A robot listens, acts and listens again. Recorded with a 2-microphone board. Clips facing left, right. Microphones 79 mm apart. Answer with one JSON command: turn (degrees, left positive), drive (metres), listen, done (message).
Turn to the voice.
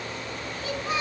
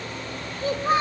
{"turn": -45}
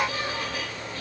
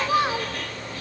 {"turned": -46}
{"turn": -90}
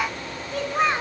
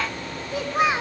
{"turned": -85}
{"done": "Found it: a child speaking, straight ahead."}